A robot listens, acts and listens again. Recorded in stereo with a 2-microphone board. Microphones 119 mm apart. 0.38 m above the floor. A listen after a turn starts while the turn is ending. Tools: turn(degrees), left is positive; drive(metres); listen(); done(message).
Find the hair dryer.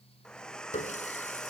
turn(degrees=30)
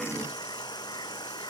turn(degrees=145)
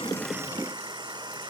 turn(degrees=-40)
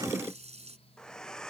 done("Found it: a hair dryer, straight ahead.")